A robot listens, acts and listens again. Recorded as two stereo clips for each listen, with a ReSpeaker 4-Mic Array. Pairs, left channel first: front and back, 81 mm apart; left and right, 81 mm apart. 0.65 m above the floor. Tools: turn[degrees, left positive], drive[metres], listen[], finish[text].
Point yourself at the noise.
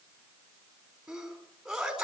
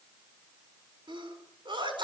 Thought: The sneeze: 95° right.
Action: turn[-95]
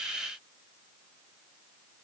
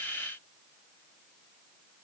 Action: finish[I heard a sneeze from this way, but can't make it out now.]